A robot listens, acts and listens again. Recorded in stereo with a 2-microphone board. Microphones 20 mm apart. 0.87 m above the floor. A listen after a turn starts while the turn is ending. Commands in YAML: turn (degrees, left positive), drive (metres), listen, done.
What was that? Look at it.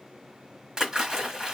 turn: -35
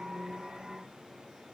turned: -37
listen: true
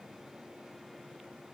done: "I heard a splash, but can't make it out now. It was about straight ahead or 110° right."